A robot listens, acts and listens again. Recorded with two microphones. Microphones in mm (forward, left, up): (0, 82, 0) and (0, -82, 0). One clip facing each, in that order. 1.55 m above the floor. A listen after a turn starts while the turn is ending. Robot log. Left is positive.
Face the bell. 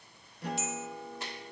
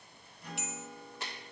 note: The bell: about 65° right or 115° right.
cmd yaw -65
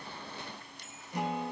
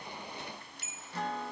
end: Found it: a bell, straight ahead.